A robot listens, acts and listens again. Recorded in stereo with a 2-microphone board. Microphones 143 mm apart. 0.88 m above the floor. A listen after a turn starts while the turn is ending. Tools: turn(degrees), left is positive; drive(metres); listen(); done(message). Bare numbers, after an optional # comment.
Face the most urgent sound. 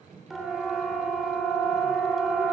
turn(30)
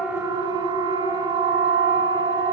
# So it is at 30° right.
turn(-30)
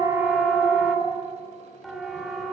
done("Facing the siren.")